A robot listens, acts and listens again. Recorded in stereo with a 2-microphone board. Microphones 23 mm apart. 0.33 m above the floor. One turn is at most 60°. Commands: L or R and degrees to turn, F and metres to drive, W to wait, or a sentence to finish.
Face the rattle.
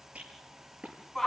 R60
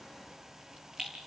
R40
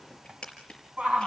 L30
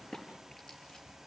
L15
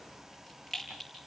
Facing the rattle.